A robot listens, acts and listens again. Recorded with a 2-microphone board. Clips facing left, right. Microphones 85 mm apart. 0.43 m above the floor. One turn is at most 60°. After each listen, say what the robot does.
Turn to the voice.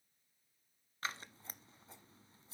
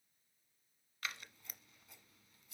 Keep listening.
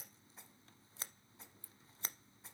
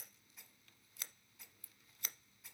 Keep listening.
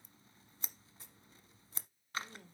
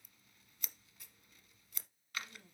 Turn 55° left.
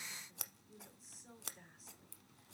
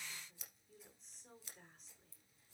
Found it: a woman speaking, straight ahead.